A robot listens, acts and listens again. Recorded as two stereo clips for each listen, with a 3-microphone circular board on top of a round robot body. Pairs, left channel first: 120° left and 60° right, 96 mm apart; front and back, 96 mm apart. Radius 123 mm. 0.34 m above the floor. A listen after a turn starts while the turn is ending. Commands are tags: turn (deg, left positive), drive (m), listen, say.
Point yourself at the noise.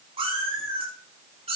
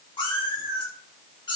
<turn deg="-40"/>
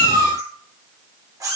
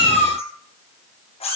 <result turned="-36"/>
<say>Found it: a cat meowing, straight ahead, over 4 m away.</say>